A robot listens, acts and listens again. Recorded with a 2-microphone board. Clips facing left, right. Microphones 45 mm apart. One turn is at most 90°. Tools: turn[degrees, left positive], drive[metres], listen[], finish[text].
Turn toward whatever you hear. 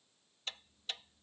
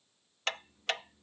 Thought: The ticking: about 70° right or 110° right.
Action: turn[-70]
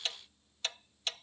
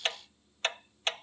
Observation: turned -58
Thought: So it is at 45° right.
Action: turn[-45]
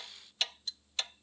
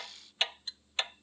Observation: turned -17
Thought: The ticking is now 30° right.
Action: turn[-30]
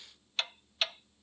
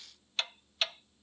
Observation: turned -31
Action: finish[Facing the ticking.]